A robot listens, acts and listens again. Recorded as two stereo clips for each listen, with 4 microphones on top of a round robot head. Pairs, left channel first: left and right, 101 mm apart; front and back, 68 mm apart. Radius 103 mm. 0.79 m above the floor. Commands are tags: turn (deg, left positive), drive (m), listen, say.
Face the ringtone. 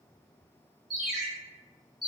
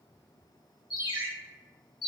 <say>Facing the ringtone.</say>